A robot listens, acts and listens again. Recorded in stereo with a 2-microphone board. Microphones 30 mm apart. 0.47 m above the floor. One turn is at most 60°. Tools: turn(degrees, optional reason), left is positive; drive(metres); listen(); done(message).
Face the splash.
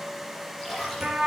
turn(degrees=30)
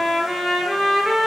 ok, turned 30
listen()
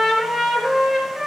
done("I heard a splash, but can't make it out now. It was about 30° right or 150° left.")